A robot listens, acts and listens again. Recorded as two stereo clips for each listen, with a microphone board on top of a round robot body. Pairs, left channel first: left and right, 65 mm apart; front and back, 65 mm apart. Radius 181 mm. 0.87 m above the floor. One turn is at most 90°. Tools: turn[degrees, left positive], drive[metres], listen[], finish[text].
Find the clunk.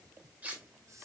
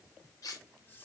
Action: listen[]
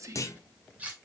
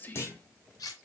Thought: The clunk: 50° left.
Action: turn[50]
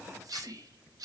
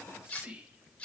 Action: finish[Facing where the clunk came from. I can't hear it now.]